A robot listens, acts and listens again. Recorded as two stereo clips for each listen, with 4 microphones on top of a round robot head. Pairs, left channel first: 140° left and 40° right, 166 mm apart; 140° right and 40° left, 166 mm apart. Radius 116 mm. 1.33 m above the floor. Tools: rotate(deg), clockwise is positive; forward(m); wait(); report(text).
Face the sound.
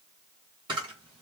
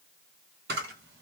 rotate(-20)
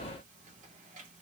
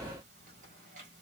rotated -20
wait()
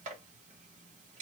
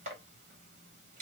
wait()
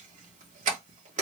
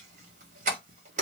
report("Found it: a camera shutter, straight ahead.")